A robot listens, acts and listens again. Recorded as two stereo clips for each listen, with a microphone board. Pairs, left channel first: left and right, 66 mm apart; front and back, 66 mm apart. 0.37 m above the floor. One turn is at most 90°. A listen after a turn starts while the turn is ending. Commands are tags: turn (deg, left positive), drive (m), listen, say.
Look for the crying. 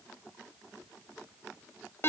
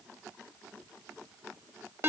<listen/>
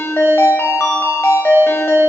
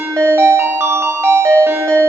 <listen/>
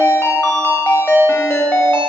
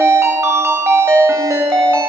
<say>I can't make out crying to turn to.</say>